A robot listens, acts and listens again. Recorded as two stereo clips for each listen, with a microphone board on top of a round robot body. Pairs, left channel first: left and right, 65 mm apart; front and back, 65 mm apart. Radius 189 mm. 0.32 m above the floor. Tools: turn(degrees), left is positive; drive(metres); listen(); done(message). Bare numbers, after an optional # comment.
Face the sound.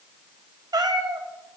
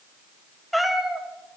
# The cat meowing: 100° right.
turn(-100)
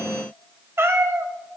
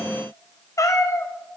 # The cat meowing is now 45° right.
turn(-45)
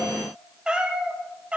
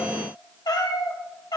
# The cat meowing is now 20° right.
turn(-20)
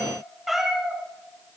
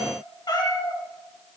done("Found it: a cat meowing, straight ahead, 2 to 4 m away.")